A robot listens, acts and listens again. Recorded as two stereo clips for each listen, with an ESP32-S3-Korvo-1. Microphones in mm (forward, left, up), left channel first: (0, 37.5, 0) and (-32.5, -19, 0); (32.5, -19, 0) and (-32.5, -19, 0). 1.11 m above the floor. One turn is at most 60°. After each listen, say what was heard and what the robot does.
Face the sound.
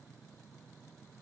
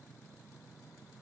Keep listening.
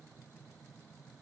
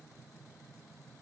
Keep listening.
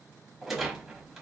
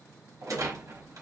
The rattle: 155° left. Turn 60° left.
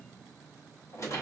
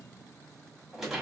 The rattle is now 95° left. Turn 60° left.
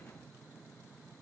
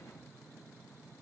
The rattle is now 10° left. Turn 10° left.
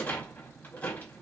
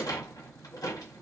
Facing the rattle.